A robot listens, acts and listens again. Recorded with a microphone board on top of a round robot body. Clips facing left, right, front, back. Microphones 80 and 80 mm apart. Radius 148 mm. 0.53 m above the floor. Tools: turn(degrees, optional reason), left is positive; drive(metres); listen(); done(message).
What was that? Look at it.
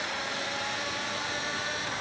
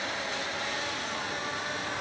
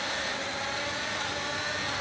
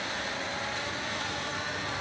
listen()
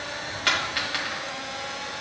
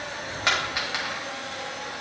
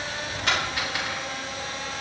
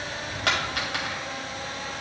turn(degrees=-165, reason="The dropped coin: 165° right.")
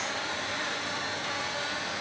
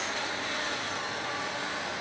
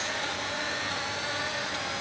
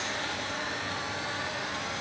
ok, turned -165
done("Facing where the dropped coin came from. I can't hear it now.")